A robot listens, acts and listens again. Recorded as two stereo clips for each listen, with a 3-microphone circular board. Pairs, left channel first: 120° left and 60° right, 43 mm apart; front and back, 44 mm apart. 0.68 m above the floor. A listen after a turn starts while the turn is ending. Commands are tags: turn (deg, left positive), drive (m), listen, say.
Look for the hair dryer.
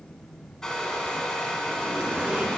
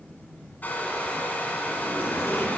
<turn deg="45"/>
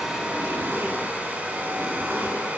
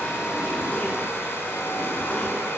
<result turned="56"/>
<turn deg="-10"/>
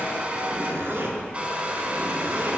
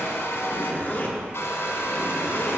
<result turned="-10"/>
<say>Found it: a hair dryer, straight ahead.</say>